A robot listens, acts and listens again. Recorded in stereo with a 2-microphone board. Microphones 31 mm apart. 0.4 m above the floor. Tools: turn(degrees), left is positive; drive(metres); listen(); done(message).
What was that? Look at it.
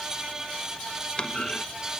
turn(degrees=30)
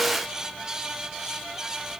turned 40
listen()
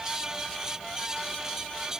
done("I heard a clunk, but can't make it out now. It was about 10° right or 110° left.")